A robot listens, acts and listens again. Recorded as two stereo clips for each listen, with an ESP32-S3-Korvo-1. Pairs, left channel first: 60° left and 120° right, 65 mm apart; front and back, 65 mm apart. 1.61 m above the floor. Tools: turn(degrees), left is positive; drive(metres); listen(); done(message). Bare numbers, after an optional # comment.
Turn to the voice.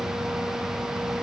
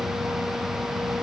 listen()
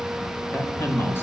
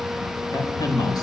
# The man speaking: 10° left.
turn(10)
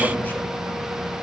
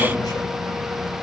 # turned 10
listen()
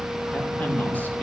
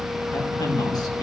done("Facing the man speaking, 2 to 4 m away.")